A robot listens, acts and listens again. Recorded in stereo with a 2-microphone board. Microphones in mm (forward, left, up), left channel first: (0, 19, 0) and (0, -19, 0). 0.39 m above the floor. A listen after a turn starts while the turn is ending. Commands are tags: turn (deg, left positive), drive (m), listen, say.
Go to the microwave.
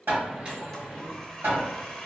<turn deg="-35"/>
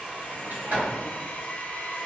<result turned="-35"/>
<listen/>
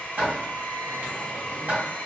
<listen/>
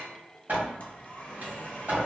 <turn deg="-105"/>
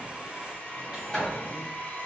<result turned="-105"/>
<listen/>
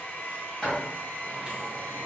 <listen/>
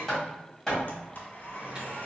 <turn deg="-30"/>
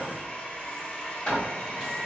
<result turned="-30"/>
<listen/>
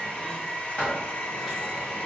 <listen/>
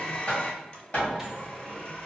<say>Facing where the microwave came from. I can't hear it now. I did not reach it.</say>